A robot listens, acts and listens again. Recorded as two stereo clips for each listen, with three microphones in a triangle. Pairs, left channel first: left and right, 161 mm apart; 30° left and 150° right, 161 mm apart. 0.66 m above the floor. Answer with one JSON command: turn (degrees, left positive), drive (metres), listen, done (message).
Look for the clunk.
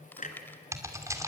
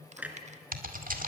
{"turn": 130}
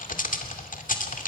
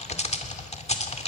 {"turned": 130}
{"done": "I heard a clunk from this way, but can't make it out now."}